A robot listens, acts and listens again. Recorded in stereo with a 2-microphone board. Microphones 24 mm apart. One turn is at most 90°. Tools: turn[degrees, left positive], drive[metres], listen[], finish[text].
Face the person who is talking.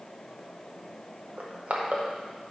Action: listen[]
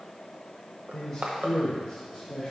Thought: The man speaking: about 35° left or 145° left.
Action: turn[35]
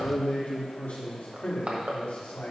Thought: So it is at 90° left.
Action: turn[90]
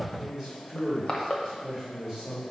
Thought: The man speaking is now 15° right.
Action: turn[-15]
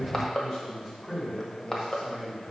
Action: finish[Facing the man speaking, 2 to 4 m away.]